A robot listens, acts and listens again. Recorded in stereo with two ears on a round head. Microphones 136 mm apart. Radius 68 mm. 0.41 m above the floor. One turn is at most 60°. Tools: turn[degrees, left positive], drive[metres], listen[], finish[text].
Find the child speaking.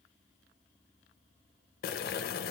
Action: listen[]
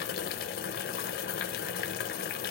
Action: listen[]
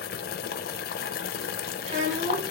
Thought: The child speaking: about 50° right or 130° right.
Action: turn[-50]
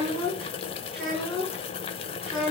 Action: finish[Found it: a child speaking, straight ahead.]